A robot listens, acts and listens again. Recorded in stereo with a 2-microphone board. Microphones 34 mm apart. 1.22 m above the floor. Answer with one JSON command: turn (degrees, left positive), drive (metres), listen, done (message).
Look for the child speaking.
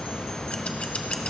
{"listen": true}
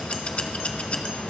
{"listen": true}
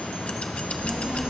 {"turn": -20}
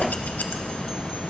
{"turn": -135}
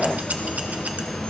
{"listen": true}
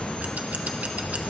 {"turn": 45}
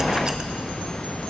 {"turn": 20}
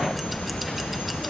{"done": "Facing the child speaking, 2 to 4 m away."}